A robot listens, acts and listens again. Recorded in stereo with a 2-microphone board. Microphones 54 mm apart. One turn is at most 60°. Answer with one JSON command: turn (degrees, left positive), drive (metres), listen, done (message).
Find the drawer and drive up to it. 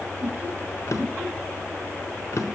{"turn": 60}
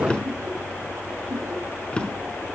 {"turn": 20}
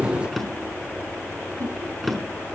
{"drive": 1.0}
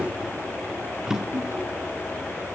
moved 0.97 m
{"turn": -10}
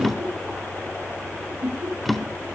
{"drive": 1.0}
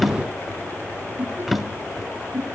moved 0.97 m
{"drive": 1.0}
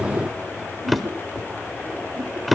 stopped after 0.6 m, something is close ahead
{"done": "I am next to the drawer."}